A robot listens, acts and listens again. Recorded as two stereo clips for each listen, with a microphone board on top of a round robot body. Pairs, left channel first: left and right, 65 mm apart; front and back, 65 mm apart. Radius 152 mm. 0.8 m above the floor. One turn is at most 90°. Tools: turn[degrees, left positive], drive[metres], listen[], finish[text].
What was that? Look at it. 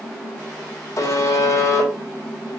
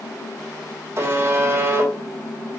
Thought: The buzzer: 125° left.
Action: turn[90]
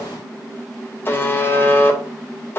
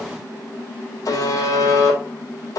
Thought: The buzzer is now 30° left.
Action: turn[30]
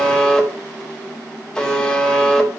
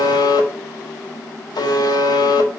Thought: The buzzer is now 10° left.
Action: turn[10]
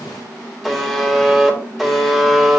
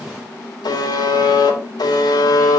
Action: finish[Found it: a buzzer, straight ahead.]